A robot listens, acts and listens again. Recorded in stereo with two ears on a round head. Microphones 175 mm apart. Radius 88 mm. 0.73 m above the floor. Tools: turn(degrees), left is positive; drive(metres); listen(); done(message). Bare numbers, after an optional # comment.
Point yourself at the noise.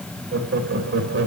# The laughter: about 65° right or 115° right.
turn(-65)
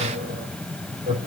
# So it is at 25° right.
turn(-25)
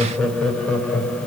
# The laughter is now 10° left.
turn(10)
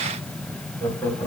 # The laughter is now 10° left.
turn(10)
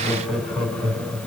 done("Found it: laughter, straight ahead, over 4 m away.")